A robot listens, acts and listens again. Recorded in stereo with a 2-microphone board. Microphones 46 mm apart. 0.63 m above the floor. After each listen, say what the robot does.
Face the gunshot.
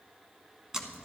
Keep listening.
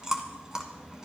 Keep listening.
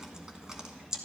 I can't make out a gunshot, only chewing.